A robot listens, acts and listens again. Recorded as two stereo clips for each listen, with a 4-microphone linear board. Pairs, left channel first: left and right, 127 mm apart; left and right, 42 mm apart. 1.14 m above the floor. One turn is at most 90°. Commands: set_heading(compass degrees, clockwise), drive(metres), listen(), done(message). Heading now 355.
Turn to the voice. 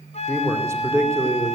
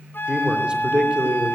set_heading(15)
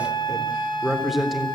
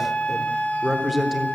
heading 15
done("Facing the man speaking.")